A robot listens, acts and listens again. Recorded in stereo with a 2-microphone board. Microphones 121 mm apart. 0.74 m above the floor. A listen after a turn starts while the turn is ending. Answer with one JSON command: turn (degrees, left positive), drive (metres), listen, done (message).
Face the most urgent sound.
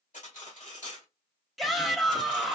{"turn": 30}
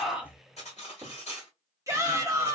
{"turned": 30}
{"turn": -25}
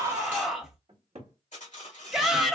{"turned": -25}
{"done": "Found it: a shout, straight ahead, 1 to 2 m away."}